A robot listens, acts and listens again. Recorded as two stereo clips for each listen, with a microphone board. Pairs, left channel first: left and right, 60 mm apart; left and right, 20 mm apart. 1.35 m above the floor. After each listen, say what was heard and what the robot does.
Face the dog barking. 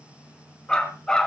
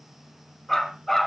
Turn 30° left.
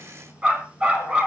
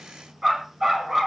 So it is at 20° right. Turn 20° right.
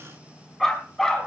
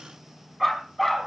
Found it: a dog barking, straight ahead, over 4 m away.